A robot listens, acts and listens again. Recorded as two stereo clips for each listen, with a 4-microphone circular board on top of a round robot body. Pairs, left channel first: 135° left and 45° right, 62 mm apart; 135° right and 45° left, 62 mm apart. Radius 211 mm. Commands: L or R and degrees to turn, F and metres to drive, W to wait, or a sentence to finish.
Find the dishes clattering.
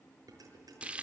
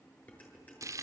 R70
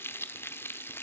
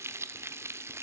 W
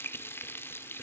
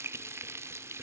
W
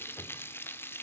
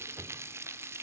Facing where the dishes clattering came from. I can't hear it now.